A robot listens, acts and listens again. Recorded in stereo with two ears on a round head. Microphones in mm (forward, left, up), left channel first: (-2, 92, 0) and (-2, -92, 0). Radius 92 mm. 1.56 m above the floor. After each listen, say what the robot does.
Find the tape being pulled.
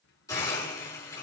Keep listening.
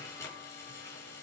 Keep listening.
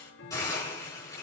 I can't make out tape being pulled to turn to.